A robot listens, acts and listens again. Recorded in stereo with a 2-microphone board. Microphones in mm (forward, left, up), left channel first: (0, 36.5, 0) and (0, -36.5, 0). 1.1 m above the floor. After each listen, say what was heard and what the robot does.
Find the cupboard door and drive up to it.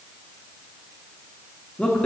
Keep listening.
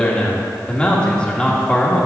Keep listening.
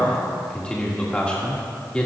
I can't make out a cupboard door, only a man speaking.